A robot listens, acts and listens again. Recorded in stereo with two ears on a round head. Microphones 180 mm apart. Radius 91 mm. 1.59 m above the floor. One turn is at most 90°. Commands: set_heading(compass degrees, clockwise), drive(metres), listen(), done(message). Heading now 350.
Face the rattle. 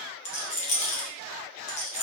set_heading(315)
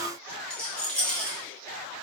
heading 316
done("Facing the rattle, 1 to 2 m away.")